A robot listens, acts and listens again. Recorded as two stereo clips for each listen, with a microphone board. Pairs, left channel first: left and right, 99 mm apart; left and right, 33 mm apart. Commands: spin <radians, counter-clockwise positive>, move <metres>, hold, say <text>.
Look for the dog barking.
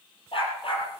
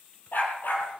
spin 1.13
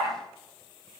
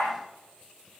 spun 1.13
say Found it: a dog barking, straight ahead, 2 to 4 m away.